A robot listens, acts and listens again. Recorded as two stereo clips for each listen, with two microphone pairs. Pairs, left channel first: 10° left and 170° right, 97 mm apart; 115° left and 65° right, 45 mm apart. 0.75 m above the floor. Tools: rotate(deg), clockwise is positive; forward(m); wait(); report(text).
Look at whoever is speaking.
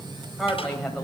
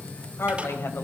rotate(-100)
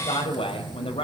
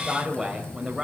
rotate(-15)
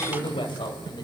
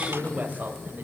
rotate(10)
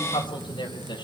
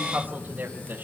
rotate(15)
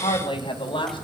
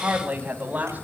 rotate(15)
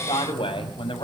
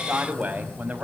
rotate(15)
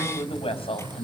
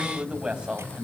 report("Found it: a woman speaking, straight ahead.")